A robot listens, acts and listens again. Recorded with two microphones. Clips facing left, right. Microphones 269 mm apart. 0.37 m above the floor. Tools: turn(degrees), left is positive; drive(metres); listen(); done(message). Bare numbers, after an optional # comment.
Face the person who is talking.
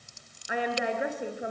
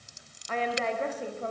turn(30)
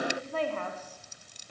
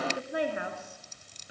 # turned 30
# So it is at 10° right.
turn(-10)
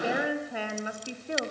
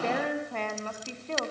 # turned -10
# The woman speaking is now 15° left.
turn(15)
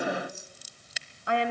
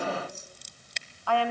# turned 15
# The woman speaking is now 20° left.
turn(20)
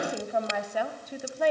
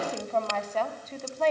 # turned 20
# The woman speaking is now 10° left.
turn(10)
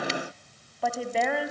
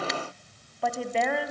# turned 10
done("Found it: a woman speaking, straight ahead, 2 to 4 m away.")